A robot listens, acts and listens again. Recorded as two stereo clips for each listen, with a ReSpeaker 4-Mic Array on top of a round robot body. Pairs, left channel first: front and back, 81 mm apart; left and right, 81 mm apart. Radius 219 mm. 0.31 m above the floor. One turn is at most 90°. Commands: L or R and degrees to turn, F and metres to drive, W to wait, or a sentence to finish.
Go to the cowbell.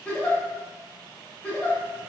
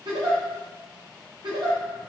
W
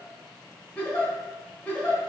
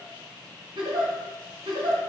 W
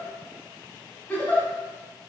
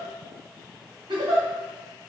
I can't make out a cowbell to turn to.